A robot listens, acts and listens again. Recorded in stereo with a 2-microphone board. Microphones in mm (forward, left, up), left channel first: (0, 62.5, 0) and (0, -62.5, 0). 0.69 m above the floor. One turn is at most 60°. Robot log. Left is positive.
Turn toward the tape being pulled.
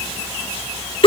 cmd idle
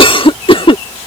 cmd idle
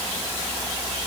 end: I can't make out tape being pulled to turn to.